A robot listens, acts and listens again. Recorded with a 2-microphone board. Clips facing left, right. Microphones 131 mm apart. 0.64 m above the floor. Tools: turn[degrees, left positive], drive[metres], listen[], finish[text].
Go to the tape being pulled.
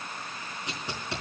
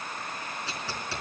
Thought: The tape being pulled: about 20° left or 160° left.
Action: turn[20]
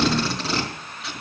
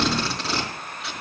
Action: drive[1.0]
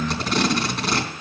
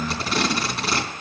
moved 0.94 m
Action: drive[1.0]
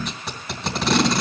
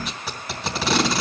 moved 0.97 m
Action: drive[1.0]
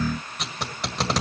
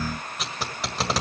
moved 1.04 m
Action: drive[1.0]
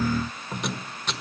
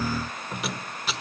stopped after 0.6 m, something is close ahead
Action: finish[I am next to the tape being pulled.]